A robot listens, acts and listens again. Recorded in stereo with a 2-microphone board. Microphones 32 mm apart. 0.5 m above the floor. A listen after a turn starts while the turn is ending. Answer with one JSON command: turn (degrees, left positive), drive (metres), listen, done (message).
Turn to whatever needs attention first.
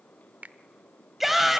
{"turn": -30}
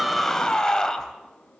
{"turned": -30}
{"turn": 20}
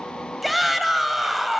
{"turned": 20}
{"done": "Found it: a shout, straight ahead."}